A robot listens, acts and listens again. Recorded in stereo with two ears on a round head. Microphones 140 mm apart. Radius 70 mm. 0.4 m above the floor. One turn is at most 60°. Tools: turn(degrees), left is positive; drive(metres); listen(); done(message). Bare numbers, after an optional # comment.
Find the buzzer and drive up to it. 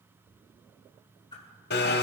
listen()
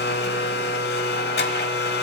listen()
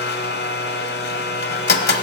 done("I can't make out a buzzer, only a blender and a whoosh.")